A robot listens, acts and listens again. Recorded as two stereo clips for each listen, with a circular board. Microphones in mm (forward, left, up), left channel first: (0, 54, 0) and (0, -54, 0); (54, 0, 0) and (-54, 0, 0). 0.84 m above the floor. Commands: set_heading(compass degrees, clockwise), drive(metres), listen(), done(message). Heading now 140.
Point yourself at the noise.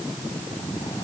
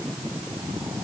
listen()
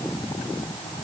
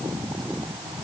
listen()
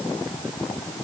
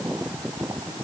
done("I can't make out anything.")